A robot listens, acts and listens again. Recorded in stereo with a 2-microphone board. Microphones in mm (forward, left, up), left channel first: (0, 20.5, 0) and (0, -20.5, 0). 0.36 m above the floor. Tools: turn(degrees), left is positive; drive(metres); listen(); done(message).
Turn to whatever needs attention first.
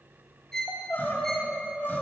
turn(degrees=55)
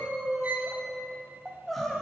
done("Facing the crying, under 1 m away.")